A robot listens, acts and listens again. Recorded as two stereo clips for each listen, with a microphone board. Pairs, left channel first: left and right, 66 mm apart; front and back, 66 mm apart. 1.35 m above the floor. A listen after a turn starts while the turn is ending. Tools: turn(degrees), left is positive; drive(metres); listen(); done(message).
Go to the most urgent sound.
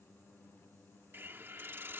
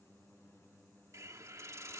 listen()
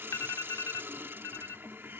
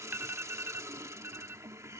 turn(degrees=125)
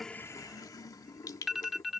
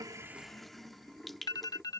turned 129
drive(metres=1.0)
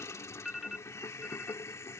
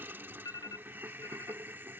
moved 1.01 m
drive(metres=1.0)
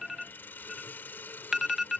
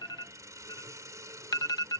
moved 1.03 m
drive(metres=1.0)
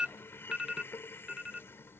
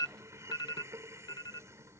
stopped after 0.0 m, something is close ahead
turn(degrees=-10)
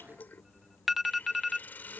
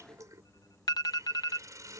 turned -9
done("I am next to the alarm.")